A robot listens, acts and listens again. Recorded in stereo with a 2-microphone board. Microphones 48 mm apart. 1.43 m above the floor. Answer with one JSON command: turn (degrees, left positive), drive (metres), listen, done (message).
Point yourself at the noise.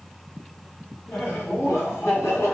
{"turn": 75}
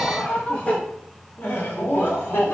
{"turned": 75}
{"turn": 55}
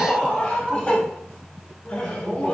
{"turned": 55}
{"turn": 25}
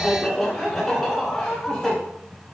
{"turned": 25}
{"done": "Facing the laughter."}